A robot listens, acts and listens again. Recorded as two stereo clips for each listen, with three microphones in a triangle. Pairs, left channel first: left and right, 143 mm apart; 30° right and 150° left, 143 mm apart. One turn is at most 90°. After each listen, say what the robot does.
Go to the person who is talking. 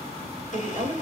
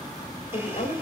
Turn 60° right.
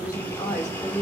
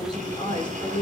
Turn 25° left.
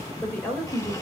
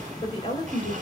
Turn 15° left.
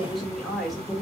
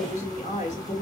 Drive 1.0 m forward.
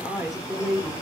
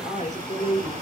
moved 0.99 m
Drive 1.0 m forward.
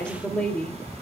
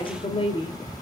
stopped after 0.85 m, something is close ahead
Turn 10° left.
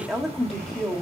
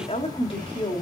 Arrived at the woman speaking, straight ahead.